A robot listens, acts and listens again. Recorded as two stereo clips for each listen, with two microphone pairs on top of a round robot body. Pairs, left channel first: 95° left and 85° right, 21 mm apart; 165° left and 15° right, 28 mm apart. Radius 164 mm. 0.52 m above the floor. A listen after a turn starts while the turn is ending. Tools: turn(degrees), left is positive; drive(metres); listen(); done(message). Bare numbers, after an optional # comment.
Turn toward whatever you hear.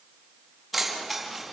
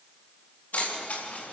# The keys jangling: 170° right.
turn(-170)
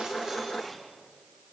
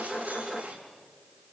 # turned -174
listen()
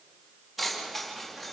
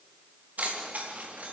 done("Facing the keys jangling, over 4 m away.")